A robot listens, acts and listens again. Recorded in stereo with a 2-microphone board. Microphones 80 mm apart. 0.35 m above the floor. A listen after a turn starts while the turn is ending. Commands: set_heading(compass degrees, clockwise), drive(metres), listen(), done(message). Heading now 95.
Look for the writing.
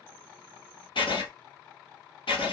set_heading(5)
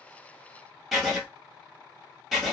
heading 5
done("Found it: writing, straight ahead.")